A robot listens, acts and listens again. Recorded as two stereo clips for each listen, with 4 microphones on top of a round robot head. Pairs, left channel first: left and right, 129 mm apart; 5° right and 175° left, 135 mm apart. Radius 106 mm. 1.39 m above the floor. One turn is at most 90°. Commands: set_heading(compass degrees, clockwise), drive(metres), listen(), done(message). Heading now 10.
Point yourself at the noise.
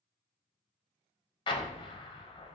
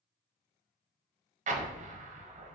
set_heading(280)
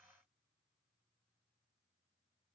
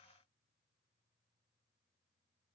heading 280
set_heading(225)
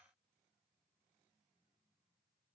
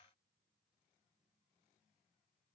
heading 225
done("Facing where the explosion came from. I can't hear it now.")